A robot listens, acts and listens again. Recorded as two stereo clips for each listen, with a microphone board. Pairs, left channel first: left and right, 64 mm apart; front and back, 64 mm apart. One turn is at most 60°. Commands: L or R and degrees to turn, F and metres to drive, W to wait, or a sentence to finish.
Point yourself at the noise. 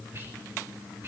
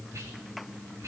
R60
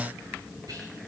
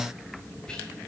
R60
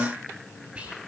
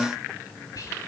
R20
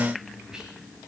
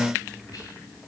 R10
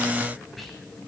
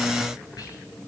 W
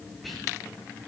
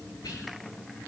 Facing the whispering.